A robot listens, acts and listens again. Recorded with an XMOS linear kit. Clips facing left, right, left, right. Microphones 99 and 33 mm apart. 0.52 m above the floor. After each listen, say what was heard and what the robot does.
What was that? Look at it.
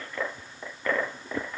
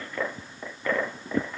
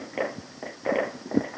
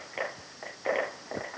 Keep listening.
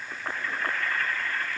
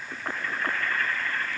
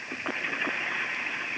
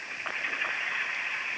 Keep listening.
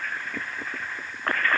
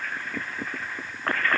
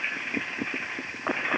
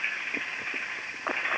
I can't make out anything to turn to.